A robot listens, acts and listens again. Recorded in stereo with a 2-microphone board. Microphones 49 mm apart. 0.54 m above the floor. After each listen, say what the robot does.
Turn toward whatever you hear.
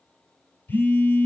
Turn 35° left.
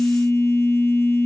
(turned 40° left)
Turn 105° left.
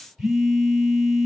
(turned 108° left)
Found it: a phone buzzing, straight ahead, 1 to 2 m away.